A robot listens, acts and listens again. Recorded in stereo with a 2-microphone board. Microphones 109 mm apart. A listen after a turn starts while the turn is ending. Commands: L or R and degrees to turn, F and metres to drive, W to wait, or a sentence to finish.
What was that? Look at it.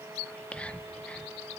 L30
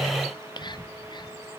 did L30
L140
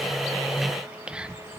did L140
R10
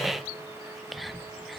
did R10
Found it: whispering, straight ahead.